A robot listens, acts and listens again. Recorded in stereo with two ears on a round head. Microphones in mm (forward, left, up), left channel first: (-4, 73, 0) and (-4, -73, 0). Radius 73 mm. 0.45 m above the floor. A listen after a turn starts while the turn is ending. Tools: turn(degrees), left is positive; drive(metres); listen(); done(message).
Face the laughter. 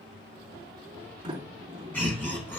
turn(degrees=30)
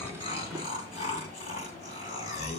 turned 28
turn(degrees=135)
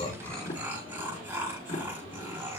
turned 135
turn(degrees=-15)
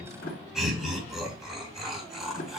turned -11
done("Facing the laughter.")